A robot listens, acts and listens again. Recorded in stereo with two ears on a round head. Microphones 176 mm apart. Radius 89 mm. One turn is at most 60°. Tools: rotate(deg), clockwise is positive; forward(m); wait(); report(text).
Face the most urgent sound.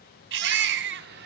rotate(60)
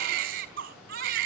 rotate(45)
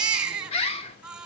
report("Found it: a baby crying, straight ahead, 2 to 4 m away.")